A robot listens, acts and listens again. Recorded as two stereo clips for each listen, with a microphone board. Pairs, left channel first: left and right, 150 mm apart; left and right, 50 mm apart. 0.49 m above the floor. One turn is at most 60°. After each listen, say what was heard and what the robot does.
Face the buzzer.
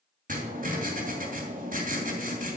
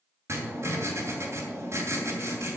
Keep listening.
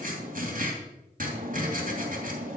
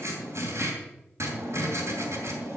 Keep listening.
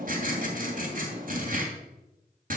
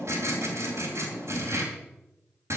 I can't make out a buzzer, only writing.